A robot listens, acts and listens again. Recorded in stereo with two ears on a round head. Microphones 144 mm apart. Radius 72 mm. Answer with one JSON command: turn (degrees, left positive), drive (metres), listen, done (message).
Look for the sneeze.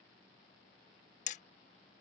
{"listen": true}
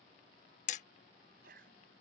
{"turn": -60}
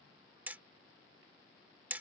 {"listen": true}
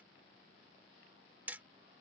{"done": "I heard a sneeze, but can't make it out now. It was about straight ahead or 60° right."}